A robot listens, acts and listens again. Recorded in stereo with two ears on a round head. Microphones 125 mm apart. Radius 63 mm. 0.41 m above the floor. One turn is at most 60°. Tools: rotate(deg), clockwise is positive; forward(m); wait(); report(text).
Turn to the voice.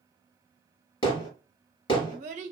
rotate(55)
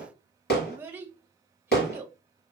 rotate(20)
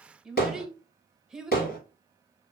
report("Found it: a child speaking, straight ahead, under 1 m away.")